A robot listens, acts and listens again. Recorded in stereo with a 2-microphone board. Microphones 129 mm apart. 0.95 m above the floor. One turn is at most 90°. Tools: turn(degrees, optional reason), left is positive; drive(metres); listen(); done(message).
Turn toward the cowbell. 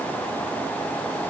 listen()
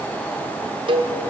turn(degrees=-40, reason="The cowbell: about 40° right or 140° right.")
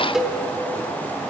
done("Found it: a cowbell, straight ahead, under 1 m away.")